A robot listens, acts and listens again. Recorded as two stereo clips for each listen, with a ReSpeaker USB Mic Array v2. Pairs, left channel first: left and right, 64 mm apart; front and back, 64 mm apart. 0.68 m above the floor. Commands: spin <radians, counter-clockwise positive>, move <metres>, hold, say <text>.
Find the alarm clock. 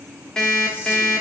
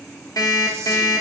spin 0.17
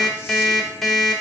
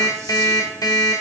say Facing the alarm clock.